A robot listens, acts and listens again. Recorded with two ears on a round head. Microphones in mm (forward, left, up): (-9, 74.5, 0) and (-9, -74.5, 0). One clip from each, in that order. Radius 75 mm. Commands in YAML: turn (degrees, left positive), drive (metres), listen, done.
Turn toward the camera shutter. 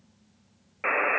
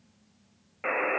listen: true
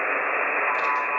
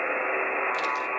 listen: true
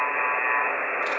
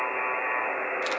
done: "I can't make out a camera shutter to turn to."